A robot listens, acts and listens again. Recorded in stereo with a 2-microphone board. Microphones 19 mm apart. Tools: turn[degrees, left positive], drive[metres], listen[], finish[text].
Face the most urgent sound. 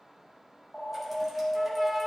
Thought: The alarm: about 15° left or 165° left.
Action: turn[15]
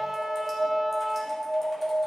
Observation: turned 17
Thought: So it is at 145° left.
Action: turn[145]
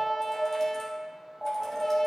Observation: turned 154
Action: finish[Found it: an alarm, straight ahead, 2 to 4 m away.]